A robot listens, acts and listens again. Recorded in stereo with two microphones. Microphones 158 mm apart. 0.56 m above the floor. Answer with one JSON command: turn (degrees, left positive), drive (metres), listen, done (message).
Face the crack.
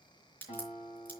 {"turn": 30}
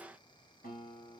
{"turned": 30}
{"listen": true}
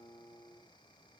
{"done": "I heard a crack, but can't make it out now. It was about 20° right or 140° left."}